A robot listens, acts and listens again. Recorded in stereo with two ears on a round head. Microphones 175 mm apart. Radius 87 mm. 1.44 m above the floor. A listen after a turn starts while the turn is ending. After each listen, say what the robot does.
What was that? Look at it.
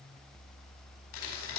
Turn 90° left.
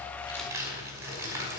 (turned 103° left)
Turn 15° right.
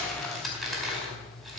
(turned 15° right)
Facing the crumpling.